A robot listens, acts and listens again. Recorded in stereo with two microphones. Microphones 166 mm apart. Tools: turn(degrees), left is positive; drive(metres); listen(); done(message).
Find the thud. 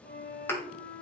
turn(degrees=30)
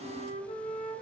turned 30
listen()
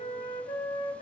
done("I heard a thud, but can't make it out now. It was about 15° right or 135° left.")